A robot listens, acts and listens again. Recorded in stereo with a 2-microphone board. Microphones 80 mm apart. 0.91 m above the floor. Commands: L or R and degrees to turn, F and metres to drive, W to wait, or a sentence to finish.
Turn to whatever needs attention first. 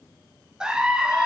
R30
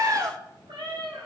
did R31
R135
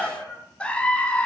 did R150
L15
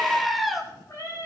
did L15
Found it: a scream, straight ahead.